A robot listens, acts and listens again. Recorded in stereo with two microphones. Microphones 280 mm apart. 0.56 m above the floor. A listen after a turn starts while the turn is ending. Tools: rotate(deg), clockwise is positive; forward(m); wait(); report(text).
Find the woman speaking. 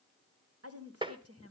rotate(55)
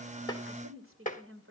rotate(60)
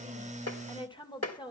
rotate(-20)
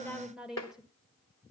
report("Facing the woman speaking.")